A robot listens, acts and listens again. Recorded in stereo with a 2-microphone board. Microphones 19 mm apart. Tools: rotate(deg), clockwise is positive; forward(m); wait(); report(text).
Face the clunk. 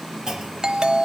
rotate(30)
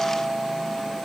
wait()
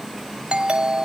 report("I heard a clunk, but can't make it out now. It was about straight ahead or 120° right.")